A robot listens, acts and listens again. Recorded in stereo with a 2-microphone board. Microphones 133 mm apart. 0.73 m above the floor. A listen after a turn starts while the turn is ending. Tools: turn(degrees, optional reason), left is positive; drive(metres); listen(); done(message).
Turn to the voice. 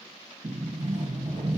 listen()
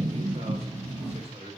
turn(degrees=-50, reason="The man speaking: about 50° right or 130° right.")
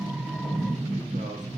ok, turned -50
listen()
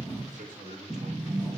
turn(degrees=-80, reason="So it is at 80° right.")
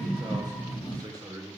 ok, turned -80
turn(degrees=-30, reason="The man speaking is now 30° right.")
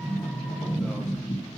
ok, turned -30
listen()
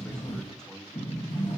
done("Facing the man speaking.")